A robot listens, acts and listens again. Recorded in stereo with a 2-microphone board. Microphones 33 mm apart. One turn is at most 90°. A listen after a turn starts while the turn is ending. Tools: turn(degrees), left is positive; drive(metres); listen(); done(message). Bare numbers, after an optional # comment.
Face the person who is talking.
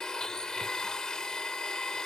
listen()
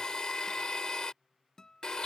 listen()
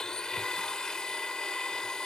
done("I can't make out anyone speaking, only a guitar and a blender.")